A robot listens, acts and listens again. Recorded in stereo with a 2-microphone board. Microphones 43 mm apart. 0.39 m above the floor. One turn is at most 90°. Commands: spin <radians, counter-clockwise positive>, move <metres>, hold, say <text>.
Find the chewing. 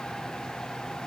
hold
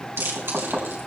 spin -1.57
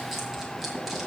hold
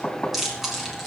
say Facing the chewing.